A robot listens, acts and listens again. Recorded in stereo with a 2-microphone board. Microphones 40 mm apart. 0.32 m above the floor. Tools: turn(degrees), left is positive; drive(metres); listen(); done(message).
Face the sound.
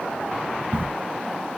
turn(degrees=-75)
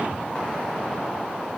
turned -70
listen()
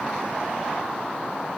done("I heard a crack, but can't make it out now. It was about 5° right or 35° right.")